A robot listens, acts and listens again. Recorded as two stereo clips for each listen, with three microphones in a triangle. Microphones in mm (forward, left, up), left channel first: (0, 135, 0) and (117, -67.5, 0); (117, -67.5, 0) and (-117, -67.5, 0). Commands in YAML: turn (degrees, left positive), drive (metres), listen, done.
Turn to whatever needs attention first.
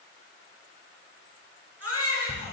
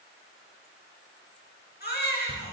turn: -45
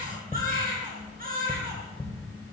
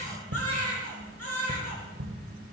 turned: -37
turn: -10
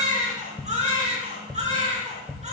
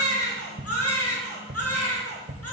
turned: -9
done: "Facing the baby crying, over 4 m away."